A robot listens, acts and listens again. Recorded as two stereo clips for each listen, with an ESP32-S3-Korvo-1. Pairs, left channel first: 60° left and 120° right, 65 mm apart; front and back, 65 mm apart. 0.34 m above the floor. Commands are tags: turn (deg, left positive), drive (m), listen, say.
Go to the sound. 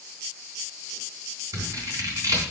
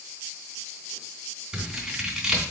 <turn deg="-105"/>
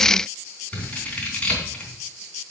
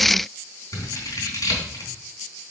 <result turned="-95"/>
<turn deg="-10"/>
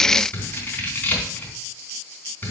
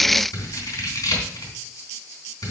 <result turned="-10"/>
<drive m="1.0"/>
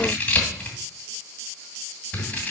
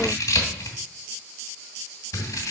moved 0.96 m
<drive m="1.0"/>
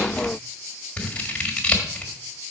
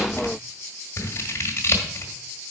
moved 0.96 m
<drive m="1.0"/>
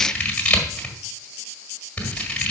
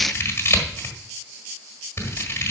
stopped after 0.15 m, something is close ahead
<say>I am next to the scissors.</say>